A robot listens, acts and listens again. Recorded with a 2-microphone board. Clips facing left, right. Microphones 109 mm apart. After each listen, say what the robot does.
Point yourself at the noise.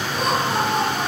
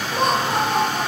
Turn 75° right.
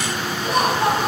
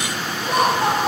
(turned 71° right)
Turn 30° right.
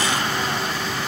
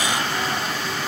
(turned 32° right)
Keep listening.
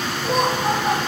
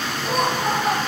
Turn 15° right.
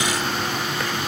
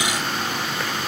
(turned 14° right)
Keep listening.
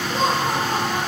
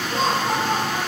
Turn 10° right.
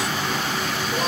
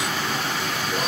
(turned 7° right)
Keep listening.
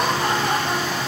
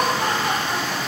Facing the laughter.